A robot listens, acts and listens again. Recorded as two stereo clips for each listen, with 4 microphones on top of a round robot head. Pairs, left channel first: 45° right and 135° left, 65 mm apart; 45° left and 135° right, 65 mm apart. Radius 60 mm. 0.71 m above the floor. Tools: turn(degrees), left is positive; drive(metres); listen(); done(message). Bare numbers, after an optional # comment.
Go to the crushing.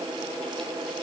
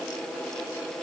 listen()
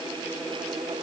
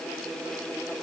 listen()
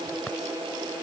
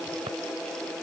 done("I can't make out crushing to turn to.")